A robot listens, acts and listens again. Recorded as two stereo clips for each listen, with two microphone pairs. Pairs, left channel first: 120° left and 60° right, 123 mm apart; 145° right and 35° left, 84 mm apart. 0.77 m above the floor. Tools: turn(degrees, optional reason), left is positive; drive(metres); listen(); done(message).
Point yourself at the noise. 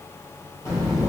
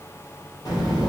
turn(degrees=-175, reason="The child speaking: 175° right.")
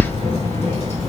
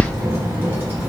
turn(degrees=100, reason="The child speaking is now 100° left.")
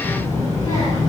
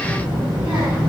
turn(degrees=65, reason="The child speaking is now 65° left.")
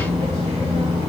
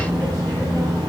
turn(degrees=-15, reason="The child speaking is now 15° right.")
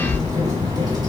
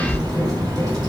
done("Facing the child speaking.")